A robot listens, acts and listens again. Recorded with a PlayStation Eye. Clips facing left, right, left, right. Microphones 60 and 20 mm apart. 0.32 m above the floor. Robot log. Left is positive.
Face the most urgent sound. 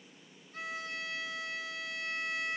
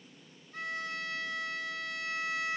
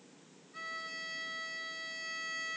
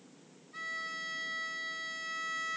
cmd idle
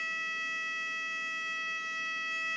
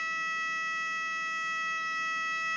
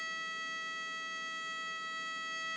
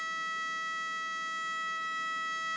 cmd idle
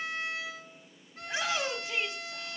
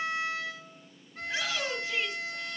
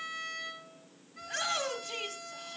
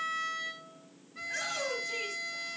cmd yaw +30
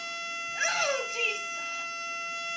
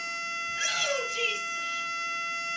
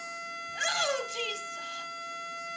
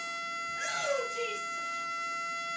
note: So it is at 135° left.
cmd yaw +135
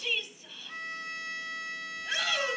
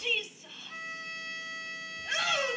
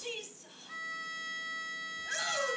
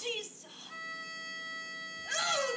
end: Found it: a shout, straight ahead, 1 to 2 m away.